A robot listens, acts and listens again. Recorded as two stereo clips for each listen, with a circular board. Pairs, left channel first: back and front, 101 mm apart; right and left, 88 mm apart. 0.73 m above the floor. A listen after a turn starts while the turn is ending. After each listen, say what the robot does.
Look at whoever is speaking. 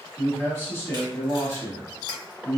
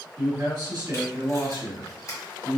Turn 115° left.
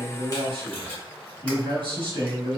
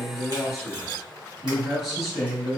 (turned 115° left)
Facing the man speaking, 1 to 2 m away.